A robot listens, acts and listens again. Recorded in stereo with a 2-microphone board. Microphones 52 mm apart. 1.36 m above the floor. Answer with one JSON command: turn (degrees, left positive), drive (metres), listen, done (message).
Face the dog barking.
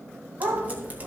{"turn": -75}
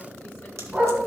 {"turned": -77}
{"turn": -20}
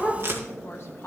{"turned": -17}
{"done": "Facing the dog barking."}